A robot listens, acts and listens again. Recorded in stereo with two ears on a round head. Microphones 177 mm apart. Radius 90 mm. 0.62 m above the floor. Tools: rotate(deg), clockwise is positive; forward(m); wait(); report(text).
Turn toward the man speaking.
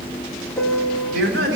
rotate(70)
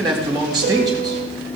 rotate(20)
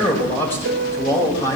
rotate(-15)
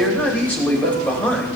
rotate(-10)
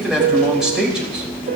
report("Facing the man speaking, 2 to 4 m away.")